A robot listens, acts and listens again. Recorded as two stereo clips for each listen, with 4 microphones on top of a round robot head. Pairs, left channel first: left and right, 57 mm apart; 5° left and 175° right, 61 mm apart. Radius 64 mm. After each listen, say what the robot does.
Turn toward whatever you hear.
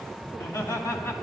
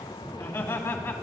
Turn 60° left.
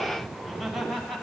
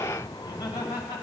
Found it: laughter, straight ahead.